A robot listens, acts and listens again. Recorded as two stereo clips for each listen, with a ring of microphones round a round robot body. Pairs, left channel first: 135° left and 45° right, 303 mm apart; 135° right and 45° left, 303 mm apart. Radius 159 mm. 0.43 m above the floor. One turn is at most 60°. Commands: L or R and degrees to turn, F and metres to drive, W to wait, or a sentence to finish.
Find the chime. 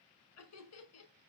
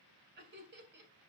W
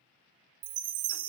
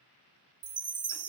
R30
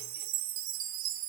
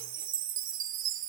R10
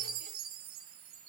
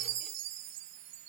Found it: a chime, straight ahead.